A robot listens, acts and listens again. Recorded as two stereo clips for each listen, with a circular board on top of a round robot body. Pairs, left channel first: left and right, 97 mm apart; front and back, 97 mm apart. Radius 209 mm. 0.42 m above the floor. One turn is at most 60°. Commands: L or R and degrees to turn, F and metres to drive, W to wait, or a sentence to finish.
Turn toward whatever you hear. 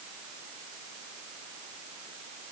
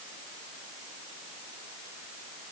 W
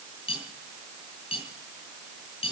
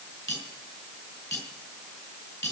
L55
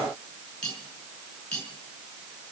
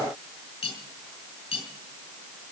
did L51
L10
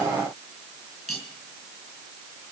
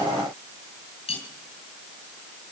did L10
Found it: cutlery clinking, straight ahead.